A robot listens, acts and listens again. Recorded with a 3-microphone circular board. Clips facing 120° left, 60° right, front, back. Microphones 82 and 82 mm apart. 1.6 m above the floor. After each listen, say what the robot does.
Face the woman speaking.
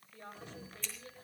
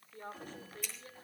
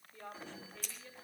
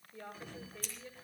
Turn 105° right.
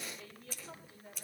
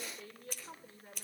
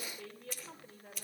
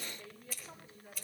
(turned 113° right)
Facing the woman speaking.